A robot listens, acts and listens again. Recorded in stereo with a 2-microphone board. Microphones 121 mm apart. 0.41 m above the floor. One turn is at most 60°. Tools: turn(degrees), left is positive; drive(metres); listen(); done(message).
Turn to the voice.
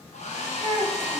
turn(degrees=-20)
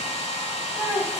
done("Found it: a child speaking, straight ahead, 1 to 2 m away.")